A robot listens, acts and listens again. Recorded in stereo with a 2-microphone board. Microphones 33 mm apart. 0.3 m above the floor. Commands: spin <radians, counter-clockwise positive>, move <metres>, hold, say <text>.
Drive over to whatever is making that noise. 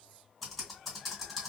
spin 0.52
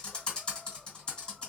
spin 2.62
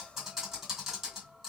spin -0.17
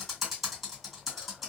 move 1.0
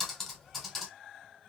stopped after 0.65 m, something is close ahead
say Arrived at the typing on a keyboard, straight ahead.